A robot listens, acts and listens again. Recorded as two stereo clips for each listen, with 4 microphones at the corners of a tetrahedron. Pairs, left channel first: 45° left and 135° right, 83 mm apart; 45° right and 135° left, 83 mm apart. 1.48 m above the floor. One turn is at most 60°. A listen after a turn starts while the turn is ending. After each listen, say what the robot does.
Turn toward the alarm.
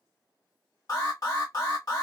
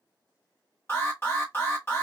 Turn 15° left.
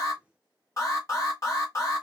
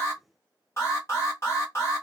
Found it: an alarm, straight ahead, 1 to 2 m away.